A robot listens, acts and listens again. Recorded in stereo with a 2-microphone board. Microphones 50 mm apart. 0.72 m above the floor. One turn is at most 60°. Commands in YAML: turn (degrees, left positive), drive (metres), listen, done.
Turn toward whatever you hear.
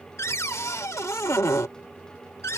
turn: 60
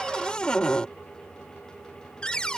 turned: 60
turn: 20
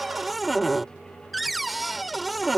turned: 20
done: "Found it: a cupboard door, straight ahead."